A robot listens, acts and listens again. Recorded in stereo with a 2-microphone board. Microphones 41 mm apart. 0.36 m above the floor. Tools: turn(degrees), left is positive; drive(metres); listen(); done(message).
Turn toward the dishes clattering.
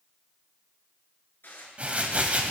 turn(degrees=60)
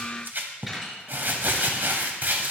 done("Found it: dishes clattering, straight ahead, 2 to 4 m away.")